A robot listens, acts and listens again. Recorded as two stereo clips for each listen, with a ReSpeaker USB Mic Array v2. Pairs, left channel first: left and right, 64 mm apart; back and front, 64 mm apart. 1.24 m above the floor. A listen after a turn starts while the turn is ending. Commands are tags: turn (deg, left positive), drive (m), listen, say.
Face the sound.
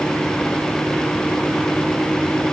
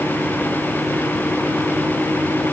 <listen/>
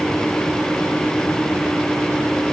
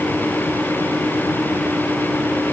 <listen/>
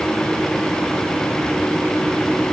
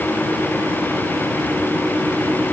<say>I can't make out anything.</say>